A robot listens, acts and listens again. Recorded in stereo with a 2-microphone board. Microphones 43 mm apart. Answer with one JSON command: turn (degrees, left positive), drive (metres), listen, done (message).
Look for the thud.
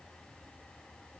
{"listen": true}
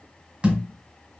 {"turn": -25}
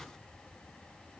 {"listen": true}
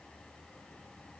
{"done": "I heard a thud, but can't make it out now. It was about straight ahead or 130° right."}